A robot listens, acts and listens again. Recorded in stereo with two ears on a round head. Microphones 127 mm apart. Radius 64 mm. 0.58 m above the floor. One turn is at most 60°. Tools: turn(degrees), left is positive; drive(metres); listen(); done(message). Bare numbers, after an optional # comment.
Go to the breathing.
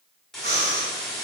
turn(-60)
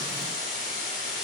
# Nothing new. It was at 30° right.
turn(-30)
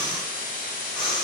# The breathing is now 10° left.
turn(10)
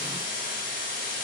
listen()
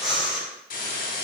drive(1.0)
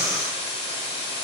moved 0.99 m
drive(1.0)
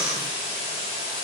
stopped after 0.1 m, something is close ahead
done("I am next to the breathing.")